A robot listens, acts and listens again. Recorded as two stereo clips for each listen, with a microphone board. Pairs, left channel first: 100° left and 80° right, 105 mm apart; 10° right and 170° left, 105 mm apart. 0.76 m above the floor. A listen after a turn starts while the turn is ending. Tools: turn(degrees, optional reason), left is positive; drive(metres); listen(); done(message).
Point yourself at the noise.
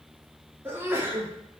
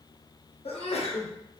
turn(degrees=-10, reason="The sneeze: 10° right.")
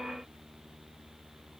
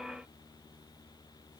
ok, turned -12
done("I heard a sneeze from this way, but can't make it out now.")